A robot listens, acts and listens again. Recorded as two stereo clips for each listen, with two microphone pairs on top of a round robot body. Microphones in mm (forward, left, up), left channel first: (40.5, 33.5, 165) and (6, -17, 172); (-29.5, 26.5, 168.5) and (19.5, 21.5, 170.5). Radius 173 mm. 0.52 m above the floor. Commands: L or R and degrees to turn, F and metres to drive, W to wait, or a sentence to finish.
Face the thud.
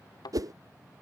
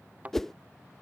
L55
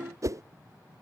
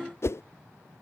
I heard a thud from this way, but can't make it out now.